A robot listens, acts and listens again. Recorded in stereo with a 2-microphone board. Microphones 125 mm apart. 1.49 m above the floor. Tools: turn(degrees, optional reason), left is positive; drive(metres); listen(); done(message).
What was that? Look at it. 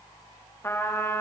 turn(degrees=20, reason="The trumpet: about 20° left or 160° left.")
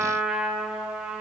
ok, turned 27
done("Facing the trumpet.")